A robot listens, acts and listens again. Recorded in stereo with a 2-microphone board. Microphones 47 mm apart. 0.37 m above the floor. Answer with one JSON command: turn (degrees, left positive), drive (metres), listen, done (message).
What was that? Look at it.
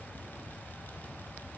{"listen": true}
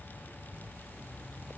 {"listen": true}
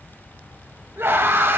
{"turn": -60}
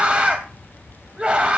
{"turn": -25}
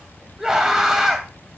{"turn": -10}
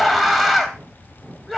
{"done": "Facing the scream, 1 to 2 m away."}